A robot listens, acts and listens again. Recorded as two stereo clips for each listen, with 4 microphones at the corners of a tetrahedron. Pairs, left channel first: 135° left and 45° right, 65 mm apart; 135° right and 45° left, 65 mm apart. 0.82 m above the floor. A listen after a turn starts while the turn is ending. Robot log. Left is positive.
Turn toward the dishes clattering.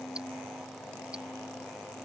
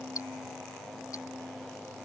cmd idle
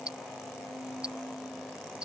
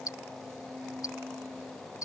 cmd idle
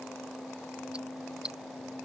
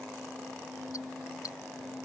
end: I can't make out dishes clattering, only ticking.